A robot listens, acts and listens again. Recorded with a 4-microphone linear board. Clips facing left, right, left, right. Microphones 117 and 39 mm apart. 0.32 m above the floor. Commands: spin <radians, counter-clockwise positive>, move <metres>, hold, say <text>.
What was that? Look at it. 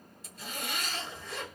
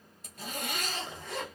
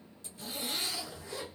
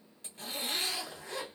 spin -0.96
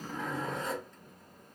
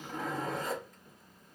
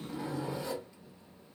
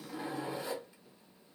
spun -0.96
spin -0.17
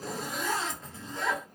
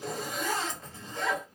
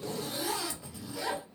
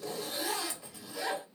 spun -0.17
say Facing the zipper.